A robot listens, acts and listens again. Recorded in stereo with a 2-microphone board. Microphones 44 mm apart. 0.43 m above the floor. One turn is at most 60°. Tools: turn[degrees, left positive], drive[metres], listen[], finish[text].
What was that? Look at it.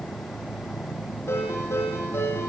Action: turn[60]
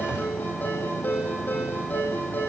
Thought: So it is at 45° left.
Action: turn[45]
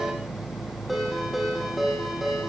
Action: finish[Facing the ringtone.]